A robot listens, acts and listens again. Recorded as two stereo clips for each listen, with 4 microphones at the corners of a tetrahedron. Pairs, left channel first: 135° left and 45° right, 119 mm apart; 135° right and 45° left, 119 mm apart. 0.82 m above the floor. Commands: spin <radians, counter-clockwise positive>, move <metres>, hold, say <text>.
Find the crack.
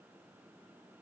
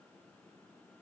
hold
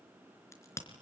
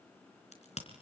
spin -2.79
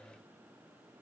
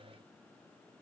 say I heard a crack from this way, but can't make it out now.